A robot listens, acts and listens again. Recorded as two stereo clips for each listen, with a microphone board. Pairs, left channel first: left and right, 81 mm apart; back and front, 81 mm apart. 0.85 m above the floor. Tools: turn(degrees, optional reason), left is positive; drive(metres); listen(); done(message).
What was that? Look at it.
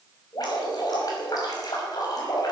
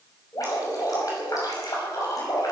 turn(degrees=135, reason="The dripping: 135° left.")
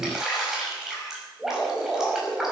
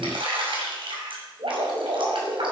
done("Found it: dripping, straight ahead.")